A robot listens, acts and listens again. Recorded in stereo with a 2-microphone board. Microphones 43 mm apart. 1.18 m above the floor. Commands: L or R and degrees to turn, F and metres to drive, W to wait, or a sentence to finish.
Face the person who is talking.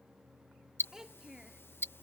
R30
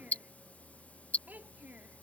R140
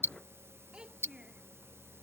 R20
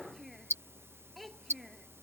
Facing the child speaking.